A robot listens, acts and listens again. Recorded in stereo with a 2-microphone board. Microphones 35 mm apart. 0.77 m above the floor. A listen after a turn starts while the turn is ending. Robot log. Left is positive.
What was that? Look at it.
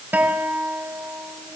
note: The guitar: about 60° right or 120° right.
cmd yaw -60
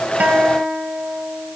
note: So it is at 55° right.
cmd yaw -55
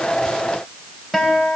end: Found it: a guitar, straight ahead, over 4 m away.